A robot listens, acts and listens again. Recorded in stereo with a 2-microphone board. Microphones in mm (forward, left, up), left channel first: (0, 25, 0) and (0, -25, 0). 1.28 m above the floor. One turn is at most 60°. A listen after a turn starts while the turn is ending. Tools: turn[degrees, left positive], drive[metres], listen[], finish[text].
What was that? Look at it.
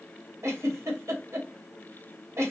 Thought: The giggle: about 75° right or 105° right.
Action: turn[-60]
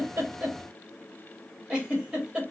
Thought: So it is at 15° right.
Action: turn[-15]
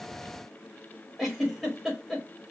Action: finish[Facing the giggle, 1 to 2 m away.]